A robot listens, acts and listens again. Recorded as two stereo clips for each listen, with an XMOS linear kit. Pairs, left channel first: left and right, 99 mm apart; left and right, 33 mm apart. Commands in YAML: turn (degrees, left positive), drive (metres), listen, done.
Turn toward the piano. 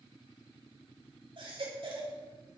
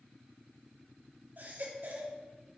listen: true
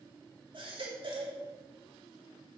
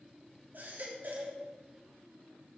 listen: true
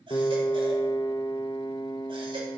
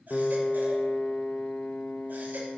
turn: 50
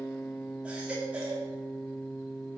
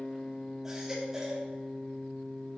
done: "Found it: a piano, straight ahead."